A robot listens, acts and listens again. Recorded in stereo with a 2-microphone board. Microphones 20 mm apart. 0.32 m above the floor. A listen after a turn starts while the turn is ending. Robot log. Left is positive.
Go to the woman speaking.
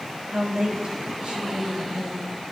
note: The woman speaking: about 70° right or 110° right.
cmd yaw -70
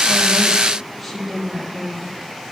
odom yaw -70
note: So it is at 10° right.
cmd yaw -10
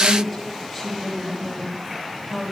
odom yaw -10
cmd fwd 1.0
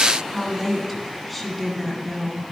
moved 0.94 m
cmd fwd 1.0
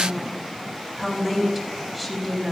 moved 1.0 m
note: The woman speaking is now 10° right.
cmd yaw -10
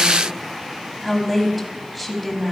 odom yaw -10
cmd fwd 1.0
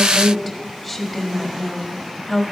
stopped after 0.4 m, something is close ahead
end: I am next to the woman speaking.